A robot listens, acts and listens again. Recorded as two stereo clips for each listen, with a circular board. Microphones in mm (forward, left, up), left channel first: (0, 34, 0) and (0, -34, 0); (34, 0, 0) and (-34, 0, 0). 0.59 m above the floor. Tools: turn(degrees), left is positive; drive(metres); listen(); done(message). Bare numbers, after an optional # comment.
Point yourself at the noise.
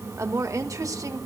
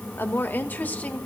# The woman speaking: 60° right.
turn(-60)
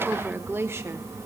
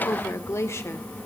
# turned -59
# The woman speaking is now 40° right.
turn(-40)
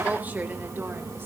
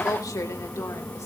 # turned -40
listen()
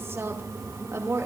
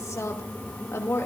# The woman speaking is now 45° right.
turn(-45)
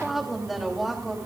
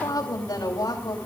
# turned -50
done("Facing the woman speaking.")